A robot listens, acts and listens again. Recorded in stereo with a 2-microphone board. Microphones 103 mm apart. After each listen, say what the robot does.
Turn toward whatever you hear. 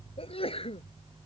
Turn 70° left.
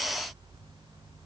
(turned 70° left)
Keep listening.
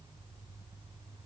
I heard a sneeze, but can't make it out now. It was about straight ahead or 40° left.